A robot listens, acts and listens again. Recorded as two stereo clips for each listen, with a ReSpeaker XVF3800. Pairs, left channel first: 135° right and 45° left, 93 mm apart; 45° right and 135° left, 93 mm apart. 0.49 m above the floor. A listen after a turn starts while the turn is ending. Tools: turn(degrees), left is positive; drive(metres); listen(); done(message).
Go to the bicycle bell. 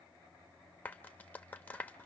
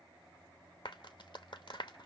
listen()
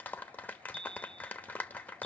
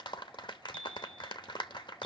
turn(degrees=35)
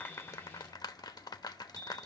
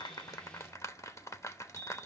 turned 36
drive(metres=1.0)
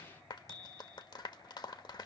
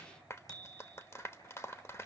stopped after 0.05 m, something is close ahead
done("Blocked. The bicycle bell is further on, straight ahead.")